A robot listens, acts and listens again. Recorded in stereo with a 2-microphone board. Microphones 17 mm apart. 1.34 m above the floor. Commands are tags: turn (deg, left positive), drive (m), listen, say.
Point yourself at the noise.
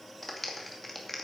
<turn deg="30"/>
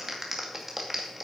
<turn deg="-25"/>
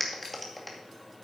<say>Found it: a clap, straight ahead, 2 to 4 m away.</say>